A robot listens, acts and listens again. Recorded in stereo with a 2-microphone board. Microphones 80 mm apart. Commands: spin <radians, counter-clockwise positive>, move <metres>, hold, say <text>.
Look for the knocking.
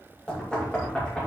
spin 0.52
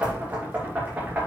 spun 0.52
spin -0.35
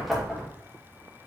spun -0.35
say Facing the knocking.